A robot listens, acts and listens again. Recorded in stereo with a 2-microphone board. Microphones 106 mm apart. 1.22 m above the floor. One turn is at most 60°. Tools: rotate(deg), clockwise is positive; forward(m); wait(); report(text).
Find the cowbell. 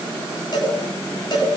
rotate(-45)
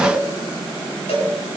rotate(-60)
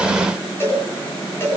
rotate(-25)
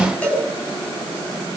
rotate(-15)
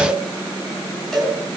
report("Found it: a cowbell, straight ahead.")